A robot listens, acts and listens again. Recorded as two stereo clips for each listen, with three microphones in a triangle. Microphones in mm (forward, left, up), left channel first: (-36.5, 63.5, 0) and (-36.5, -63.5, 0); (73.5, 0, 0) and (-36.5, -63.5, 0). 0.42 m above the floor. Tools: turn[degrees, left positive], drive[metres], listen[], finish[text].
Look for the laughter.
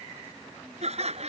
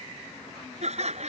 Thought: The laughter: 120° right.
Action: turn[-120]
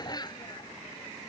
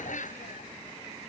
Thought: The laughter is now 35° left.
Action: turn[35]
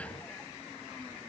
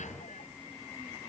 Action: listen[]
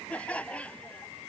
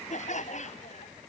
Thought: The laughter is now 10° left.
Action: turn[10]
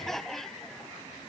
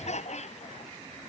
Action: finish[Facing the laughter.]